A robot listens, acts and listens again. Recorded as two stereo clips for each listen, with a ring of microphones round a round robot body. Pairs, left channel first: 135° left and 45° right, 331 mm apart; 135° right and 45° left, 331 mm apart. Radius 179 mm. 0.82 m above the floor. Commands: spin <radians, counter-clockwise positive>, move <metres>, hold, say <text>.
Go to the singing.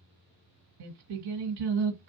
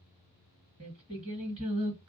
spin -0.52
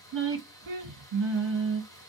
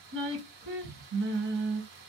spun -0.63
spin 0.17
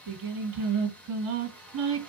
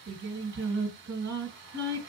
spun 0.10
move 1.0
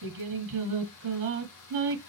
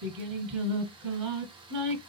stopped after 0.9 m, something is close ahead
spin 0.17
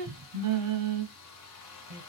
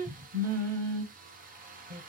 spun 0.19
say Arrived at the singing, straight ahead.